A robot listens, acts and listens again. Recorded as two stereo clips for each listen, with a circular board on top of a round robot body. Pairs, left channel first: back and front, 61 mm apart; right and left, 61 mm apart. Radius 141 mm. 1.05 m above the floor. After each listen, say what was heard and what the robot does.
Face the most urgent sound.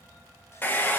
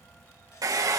Keep listening.
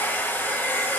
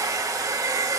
Keep listening.
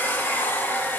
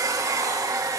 I can't make out anything urgent to turn to.